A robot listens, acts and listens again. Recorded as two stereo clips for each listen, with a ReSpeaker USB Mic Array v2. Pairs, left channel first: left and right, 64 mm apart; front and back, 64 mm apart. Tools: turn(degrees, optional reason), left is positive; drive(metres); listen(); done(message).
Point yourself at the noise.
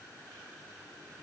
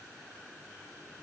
listen()
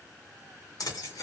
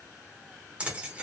turn(degrees=110, reason="The keys jangling: 110° left.")
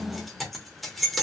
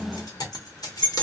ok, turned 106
done("Facing the keys jangling.")